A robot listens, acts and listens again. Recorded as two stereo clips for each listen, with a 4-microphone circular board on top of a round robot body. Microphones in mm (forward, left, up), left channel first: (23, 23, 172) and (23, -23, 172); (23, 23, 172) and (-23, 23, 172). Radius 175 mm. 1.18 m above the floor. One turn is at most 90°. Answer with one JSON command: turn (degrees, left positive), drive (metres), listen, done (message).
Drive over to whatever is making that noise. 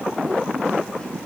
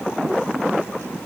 {"listen": true}
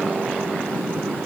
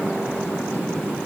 {"listen": true}
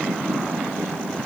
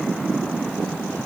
{"done": "I can't make out anything."}